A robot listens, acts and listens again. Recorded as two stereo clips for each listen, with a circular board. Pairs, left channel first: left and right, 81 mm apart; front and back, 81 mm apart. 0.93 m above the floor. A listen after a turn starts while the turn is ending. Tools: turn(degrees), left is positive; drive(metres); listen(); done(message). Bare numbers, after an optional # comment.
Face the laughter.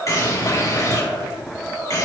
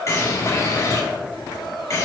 listen()
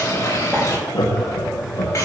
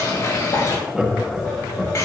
# The laughter: 95° left.
turn(95)
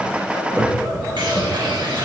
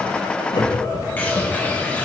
# The laughter is now 20° right.
turn(-20)
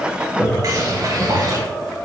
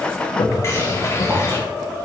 done("Facing the laughter, 1 to 2 m away.")